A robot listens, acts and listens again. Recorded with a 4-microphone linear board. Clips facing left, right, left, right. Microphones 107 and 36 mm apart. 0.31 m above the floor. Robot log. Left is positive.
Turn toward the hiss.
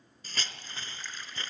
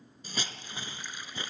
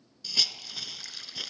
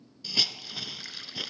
cmd yaw -30
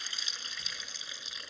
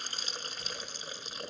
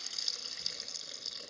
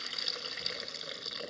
note: So it is at 135° right.
cmd yaw -135
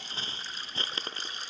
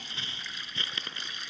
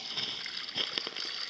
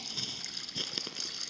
note: The hiss is now 35° left.
cmd yaw +35
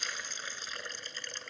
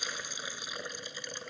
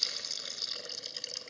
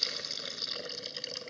note: The hiss is now 10° right.
cmd yaw -10
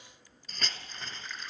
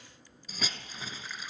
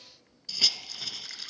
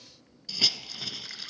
end: Found it: a hiss, straight ahead, under 1 m away.